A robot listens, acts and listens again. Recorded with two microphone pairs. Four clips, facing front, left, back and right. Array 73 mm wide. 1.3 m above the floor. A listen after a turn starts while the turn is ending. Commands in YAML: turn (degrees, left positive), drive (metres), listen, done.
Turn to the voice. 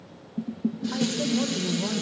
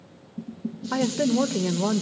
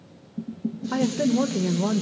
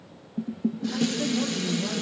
turn: 110
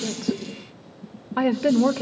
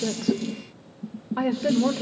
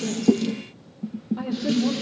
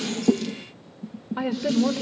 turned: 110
done: "Facing the woman speaking, 1 to 2 m away."